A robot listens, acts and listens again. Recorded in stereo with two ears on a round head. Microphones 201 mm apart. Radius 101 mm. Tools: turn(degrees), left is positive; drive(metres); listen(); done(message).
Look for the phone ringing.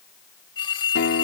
turn(degrees=20)
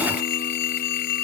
turn(degrees=135)
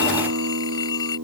turn(degrees=20)
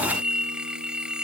done("Found it: a phone ringing, straight ahead.")